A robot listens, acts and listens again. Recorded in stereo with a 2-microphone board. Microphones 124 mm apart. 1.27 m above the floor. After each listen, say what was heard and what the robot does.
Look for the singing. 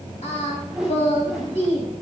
The singing: about 60° left or 120° left. Turn 60° left.
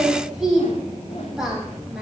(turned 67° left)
Found it: singing, straight ahead, 2 to 4 m away.